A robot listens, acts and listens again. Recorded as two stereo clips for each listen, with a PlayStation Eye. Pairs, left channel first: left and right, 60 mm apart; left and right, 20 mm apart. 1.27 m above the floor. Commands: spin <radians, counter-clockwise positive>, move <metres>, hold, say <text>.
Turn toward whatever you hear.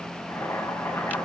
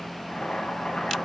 spin 1.05
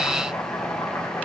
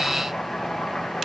spin 1.05
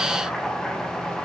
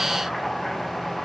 say Facing the boiling.